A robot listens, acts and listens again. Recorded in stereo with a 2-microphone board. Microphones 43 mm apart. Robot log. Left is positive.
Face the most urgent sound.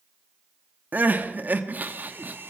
note: The crying: about 45° right or 135° right.
cmd yaw -45
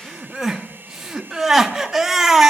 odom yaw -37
note: So it is at 10° right.
cmd yaw -10
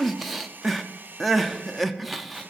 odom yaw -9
end: Facing the crying.